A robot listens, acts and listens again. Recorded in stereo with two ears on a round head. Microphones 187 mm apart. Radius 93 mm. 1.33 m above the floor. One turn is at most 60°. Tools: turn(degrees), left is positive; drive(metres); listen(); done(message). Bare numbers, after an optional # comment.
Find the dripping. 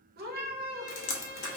# The dripping: about 70° left or 110° left.
turn(60)
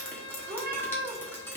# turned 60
# So it is at 10° left.
turn(10)
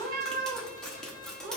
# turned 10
done("Facing the dripping, under 1 m away.")